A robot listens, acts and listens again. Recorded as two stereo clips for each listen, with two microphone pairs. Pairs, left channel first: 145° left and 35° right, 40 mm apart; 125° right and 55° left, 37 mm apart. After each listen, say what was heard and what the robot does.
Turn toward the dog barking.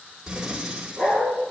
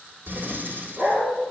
The dog barking: 95° left. Turn 95° left.
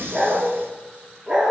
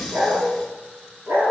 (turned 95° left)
The dog barking is now 40° left. Turn 40° left.
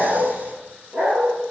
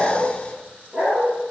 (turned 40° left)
The dog barking is now 20° left. Turn 20° left.
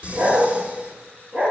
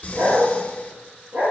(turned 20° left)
The dog barking is now 15° left. Turn 15° left.
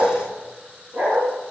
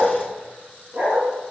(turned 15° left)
Found it: a dog barking, straight ahead, 2 to 4 m away.